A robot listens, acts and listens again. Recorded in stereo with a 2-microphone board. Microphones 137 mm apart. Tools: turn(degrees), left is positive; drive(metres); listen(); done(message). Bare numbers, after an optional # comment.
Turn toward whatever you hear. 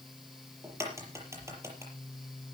# The crack: about 20° right or 160° right.
turn(-20)
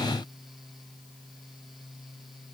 listen()
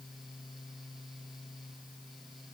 done("I heard a crack, but can't make it out now. It was about straight ahead or 140° right.")